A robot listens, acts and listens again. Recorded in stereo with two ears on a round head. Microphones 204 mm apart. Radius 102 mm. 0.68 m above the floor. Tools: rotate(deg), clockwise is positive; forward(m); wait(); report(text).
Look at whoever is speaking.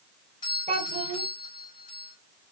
rotate(30)
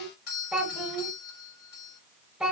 report("Facing the child speaking, 2 to 4 m away.")